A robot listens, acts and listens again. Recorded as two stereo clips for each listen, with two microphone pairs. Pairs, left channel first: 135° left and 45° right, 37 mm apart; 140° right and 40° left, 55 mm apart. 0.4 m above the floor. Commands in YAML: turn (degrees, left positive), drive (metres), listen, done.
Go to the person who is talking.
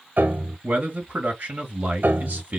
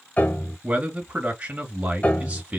turn: -20
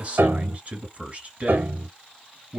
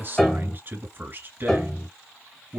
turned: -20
drive: 1.0
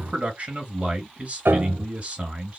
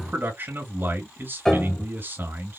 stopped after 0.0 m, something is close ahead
done: "Blocked. The man speaking is further on, straight ahead."